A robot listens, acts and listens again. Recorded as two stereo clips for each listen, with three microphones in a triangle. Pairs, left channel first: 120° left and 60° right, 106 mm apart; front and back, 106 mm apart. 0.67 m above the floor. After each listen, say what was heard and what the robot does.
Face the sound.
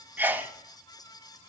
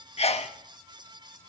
The sneeze: 10° left. Turn 10° left.
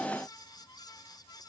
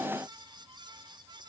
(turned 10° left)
I heard a sneeze from this way, but can't make it out now.